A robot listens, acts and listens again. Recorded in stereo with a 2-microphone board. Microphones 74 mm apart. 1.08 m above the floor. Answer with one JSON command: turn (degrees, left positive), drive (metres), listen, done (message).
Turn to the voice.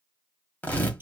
{"listen": true}
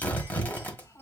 {"turn": 55}
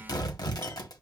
{"listen": true}
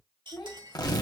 {"turn": 70}
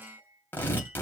{"listen": true}
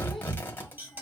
{"listen": true}
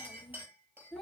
{"done": "Facing the child speaking."}